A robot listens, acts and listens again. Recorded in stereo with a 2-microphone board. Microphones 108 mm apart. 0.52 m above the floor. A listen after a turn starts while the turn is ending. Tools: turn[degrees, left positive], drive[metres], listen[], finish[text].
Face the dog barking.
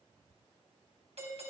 Action: listen[]
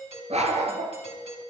Action: turn[-90]
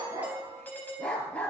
Thought: So it is at 10° left.
Action: turn[10]
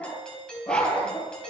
Thought: The dog barking is now 10° left.
Action: turn[10]
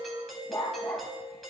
Thought: The dog barking is now 10° left.
Action: turn[10]
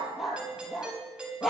Action: finish[Facing the dog barking.]